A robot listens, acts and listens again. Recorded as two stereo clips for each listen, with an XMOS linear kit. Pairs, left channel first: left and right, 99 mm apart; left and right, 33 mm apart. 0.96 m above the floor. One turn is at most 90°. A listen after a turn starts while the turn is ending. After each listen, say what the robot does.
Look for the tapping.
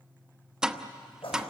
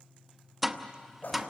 Turn 30° right.
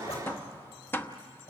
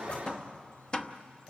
Turn 25° left.
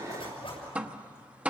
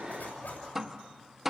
Turn 15° right.
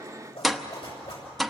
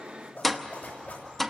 Found it: tapping, straight ahead, under 1 m away.